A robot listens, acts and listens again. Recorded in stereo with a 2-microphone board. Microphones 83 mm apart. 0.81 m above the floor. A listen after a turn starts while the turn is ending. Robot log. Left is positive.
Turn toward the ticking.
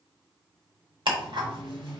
cmd yaw -90
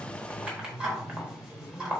note: So it is at 10° right.
cmd yaw -10
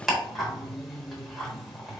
end: Facing the ticking.